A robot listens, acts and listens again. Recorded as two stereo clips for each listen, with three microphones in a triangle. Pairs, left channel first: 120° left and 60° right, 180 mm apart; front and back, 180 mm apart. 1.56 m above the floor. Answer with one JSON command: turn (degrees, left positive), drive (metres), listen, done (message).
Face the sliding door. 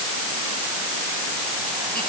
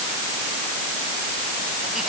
{"listen": true}
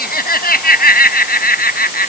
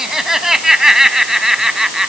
{"listen": true}
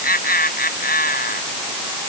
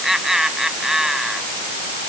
{"done": "I can't make out a sliding door, only laughter."}